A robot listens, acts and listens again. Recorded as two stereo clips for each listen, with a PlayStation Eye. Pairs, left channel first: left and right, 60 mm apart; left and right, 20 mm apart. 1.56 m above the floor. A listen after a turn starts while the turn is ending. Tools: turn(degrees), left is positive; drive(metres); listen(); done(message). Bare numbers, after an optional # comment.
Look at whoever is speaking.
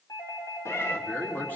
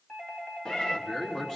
# The man speaking: about 35° left or 145° left.
turn(35)
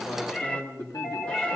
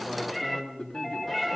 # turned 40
# So it is at 110° left.
turn(110)
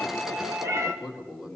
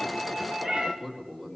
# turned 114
done("Found it: a man speaking, straight ahead, 2 to 4 m away.")